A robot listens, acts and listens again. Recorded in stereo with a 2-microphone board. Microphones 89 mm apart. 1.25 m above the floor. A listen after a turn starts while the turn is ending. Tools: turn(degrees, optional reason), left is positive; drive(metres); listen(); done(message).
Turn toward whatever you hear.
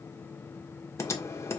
turn(degrees=30, reason="The typing on a keyboard: about 30° left or 150° left.")
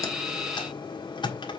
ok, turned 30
turn(degrees=115, reason="So it is at 115° left.")
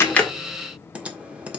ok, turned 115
turn(degrees=-15, reason="The typing on a keyboard is now 15° right.")
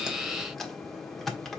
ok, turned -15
done("Found it: typing on a keyboard, straight ahead.")